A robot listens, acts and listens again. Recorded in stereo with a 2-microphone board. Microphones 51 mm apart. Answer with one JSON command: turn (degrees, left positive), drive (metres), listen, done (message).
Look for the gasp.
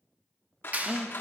{"turn": -30}
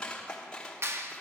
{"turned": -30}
{"listen": true}
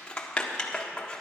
{"done": "I heard a gasp, but can't make it out now. It was about 25° left or 145° right."}